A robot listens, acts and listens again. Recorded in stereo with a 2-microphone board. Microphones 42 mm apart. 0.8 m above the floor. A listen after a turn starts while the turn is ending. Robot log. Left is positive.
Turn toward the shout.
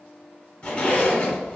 cmd idle
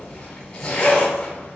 cmd idle
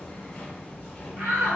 note: The shout: about 40° right or 140° right.
cmd yaw -40
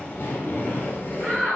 note: So it is at 85° right.
cmd yaw -85
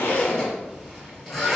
cmd idle
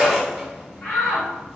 note: The shout is now 25° left.
cmd yaw +25
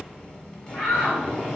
end: Facing the shout.